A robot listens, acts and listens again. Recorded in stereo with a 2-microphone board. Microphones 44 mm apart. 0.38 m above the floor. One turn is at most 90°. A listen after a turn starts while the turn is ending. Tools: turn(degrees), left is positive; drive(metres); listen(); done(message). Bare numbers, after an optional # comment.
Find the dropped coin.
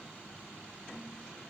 listen()
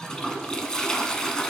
listen()
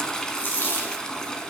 # The dropped coin: about 50° left or 130° left.
turn(50)
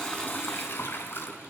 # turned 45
listen()
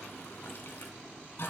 done("I heard a dropped coin, but can't make it out now. It was about 5° left or 85° left.")